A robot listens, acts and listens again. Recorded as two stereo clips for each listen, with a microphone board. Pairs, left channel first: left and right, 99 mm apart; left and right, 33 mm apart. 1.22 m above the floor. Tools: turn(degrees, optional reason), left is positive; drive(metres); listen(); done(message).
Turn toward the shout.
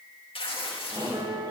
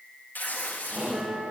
turn(degrees=-45, reason="The shout: about 45° right or 135° right.")
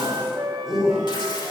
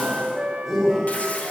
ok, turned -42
done("Facing the shout, over 4 m away.")